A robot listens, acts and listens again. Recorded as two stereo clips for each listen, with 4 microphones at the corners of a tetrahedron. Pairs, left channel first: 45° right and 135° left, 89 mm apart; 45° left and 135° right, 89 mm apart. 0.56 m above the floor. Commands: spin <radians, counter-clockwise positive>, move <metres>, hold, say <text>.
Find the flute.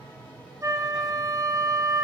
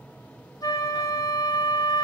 spin 1.57
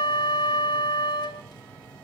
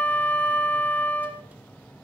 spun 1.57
spin -0.44
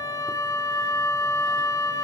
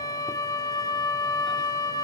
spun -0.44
say Facing the flute, 1 to 2 m away.